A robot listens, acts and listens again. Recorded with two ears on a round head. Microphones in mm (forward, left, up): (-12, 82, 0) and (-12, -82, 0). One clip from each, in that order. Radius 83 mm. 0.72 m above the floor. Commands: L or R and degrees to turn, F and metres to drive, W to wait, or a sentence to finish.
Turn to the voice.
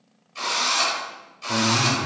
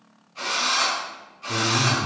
L70
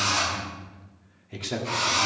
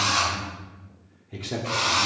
L25
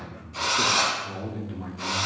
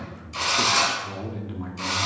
R15
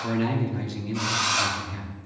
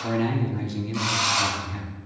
Facing the man speaking.